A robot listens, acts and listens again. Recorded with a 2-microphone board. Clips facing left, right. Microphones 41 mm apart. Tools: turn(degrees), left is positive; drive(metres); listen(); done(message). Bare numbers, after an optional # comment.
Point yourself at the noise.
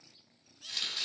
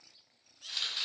turn(-30)
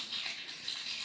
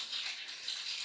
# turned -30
# So it is at 20° left.
turn(20)
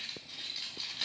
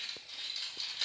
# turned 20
# The chopping is now 10° left.
turn(10)
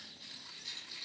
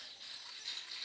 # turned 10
done("Facing the chopping, over 4 m away.")